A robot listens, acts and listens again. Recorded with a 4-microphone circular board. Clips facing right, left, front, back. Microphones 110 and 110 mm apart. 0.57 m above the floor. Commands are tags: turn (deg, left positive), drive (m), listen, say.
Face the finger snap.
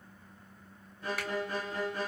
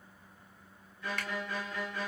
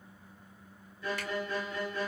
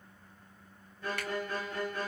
<turn deg="-175"/>
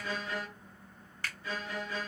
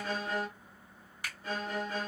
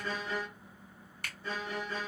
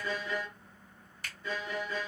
<turn deg="15"/>
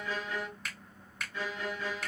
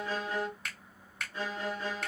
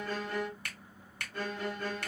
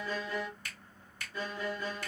<say>Found it: a finger snap, straight ahead, 1 to 2 m away.</say>